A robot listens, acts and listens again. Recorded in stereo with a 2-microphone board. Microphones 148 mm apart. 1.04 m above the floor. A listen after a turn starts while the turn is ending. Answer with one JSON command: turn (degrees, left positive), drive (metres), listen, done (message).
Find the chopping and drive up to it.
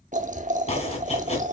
{"turn": 45}
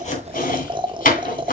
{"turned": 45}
{"turn": 85}
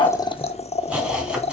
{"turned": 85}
{"turn": -10}
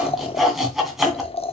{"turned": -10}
{"drive": 1.0}
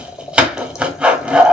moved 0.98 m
{"turn": -10}
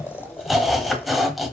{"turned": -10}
{"drive": 1.0}
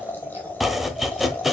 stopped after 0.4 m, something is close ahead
{"done": "Arrived at the chopping, straight ahead."}